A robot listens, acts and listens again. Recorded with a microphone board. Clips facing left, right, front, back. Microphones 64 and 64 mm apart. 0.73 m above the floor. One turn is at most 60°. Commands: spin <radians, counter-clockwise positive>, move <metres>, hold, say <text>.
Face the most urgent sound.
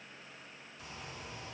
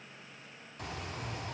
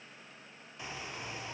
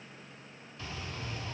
hold
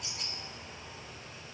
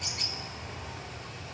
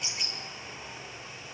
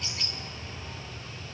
hold
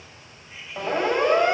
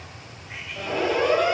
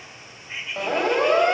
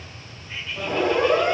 spin 0.52
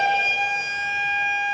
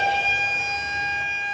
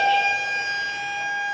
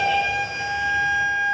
say Found it: a siren, straight ahead, 2 to 4 m away.